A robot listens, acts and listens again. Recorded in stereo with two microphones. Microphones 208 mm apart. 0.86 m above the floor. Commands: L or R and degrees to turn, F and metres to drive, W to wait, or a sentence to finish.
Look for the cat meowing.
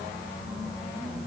W
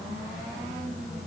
W
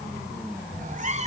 R35
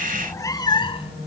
L30
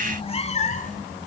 L40
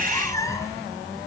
L15
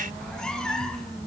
Facing the cat meowing, 1 to 2 m away.